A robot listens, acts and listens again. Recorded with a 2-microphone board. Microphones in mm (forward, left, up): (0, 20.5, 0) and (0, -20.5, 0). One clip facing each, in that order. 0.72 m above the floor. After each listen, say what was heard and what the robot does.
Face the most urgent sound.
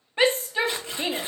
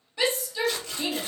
The shout: about 40° left or 140° left. Turn 40° left.
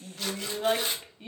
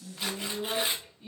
So it is at 95° left. Turn 95° left.
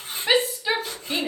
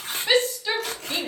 The shout is now 15° left. Turn 15° left.
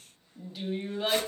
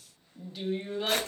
Found it: a shout, straight ahead, under 1 m away.